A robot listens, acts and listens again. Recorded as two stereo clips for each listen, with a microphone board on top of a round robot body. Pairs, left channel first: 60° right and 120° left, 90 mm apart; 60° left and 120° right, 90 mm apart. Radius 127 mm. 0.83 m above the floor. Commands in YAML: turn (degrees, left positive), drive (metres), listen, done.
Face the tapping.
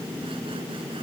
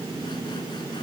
listen: true
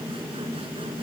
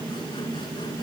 listen: true
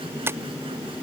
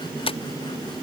turn: 55
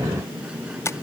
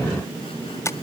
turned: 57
done: "Found it: tapping, straight ahead."